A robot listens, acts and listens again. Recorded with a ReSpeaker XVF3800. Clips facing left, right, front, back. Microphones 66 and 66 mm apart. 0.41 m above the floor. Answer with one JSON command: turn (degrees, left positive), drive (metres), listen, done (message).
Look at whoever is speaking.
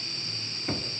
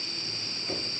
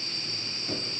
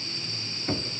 {"listen": true}
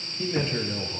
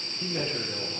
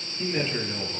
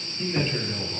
{"turn": 75}
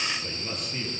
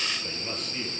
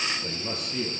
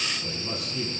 {"done": "Found it: a man speaking, straight ahead, over 4 m away."}